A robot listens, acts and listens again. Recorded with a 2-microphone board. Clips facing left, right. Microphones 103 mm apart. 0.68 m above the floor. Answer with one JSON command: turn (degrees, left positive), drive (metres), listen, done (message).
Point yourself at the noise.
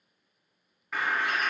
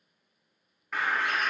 {"turn": 30}
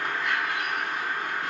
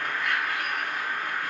{"turn": 150}
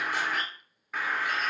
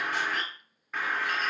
{"done": "Found it: a bird, straight ahead, under 1 m away."}